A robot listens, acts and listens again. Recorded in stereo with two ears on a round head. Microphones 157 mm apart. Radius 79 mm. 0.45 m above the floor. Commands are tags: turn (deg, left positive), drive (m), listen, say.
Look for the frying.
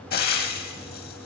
<turn deg="55"/>
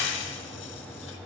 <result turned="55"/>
<turn deg="70"/>
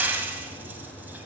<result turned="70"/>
<turn deg="-10"/>
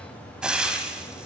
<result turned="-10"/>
<say>Facing the frying.</say>